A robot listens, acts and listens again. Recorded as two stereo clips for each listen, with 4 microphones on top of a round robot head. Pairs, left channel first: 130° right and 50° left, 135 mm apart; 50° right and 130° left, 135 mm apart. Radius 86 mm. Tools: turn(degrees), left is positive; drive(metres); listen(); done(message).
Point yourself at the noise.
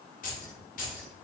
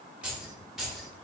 turn(degrees=-140)
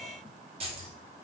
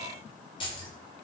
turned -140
done("Found it: keys jangling, straight ahead, 1 to 2 m away.")